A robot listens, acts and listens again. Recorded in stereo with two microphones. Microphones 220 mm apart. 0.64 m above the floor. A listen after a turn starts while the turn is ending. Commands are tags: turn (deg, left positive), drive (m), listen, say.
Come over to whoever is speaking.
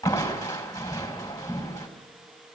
<listen/>
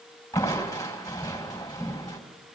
<listen/>
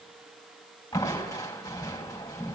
<say>I can't make out anyone speaking, only crushing.</say>